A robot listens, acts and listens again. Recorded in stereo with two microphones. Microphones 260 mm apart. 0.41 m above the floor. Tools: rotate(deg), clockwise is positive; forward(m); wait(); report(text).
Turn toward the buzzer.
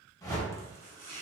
wait()
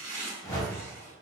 wait()
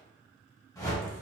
report("I can't make out a buzzer, only a whoosh and chopping.")